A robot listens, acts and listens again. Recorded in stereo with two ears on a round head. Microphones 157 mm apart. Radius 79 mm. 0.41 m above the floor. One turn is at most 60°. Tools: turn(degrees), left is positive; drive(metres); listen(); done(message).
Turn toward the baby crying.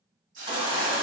turn(degrees=-30)
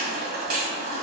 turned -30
turn(degrees=-60)
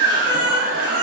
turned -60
turn(degrees=-60)
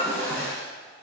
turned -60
done("Facing the baby crying, 1 to 2 m away.")